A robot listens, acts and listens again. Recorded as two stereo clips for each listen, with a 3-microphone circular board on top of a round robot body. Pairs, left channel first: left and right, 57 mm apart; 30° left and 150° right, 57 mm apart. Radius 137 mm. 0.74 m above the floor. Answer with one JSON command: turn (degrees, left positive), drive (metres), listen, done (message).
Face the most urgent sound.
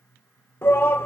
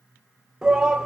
{"turn": 130}
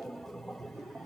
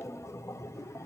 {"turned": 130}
{"done": "Facing the shout."}